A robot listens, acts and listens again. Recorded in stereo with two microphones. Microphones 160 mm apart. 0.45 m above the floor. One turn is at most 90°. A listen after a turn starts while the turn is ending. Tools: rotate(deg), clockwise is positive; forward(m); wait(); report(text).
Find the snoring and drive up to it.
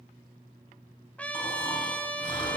rotate(-30)
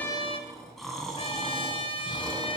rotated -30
forward(1.0)
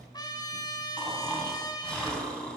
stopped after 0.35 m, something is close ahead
report("Blocked. The snoring is further on, straight ahead.")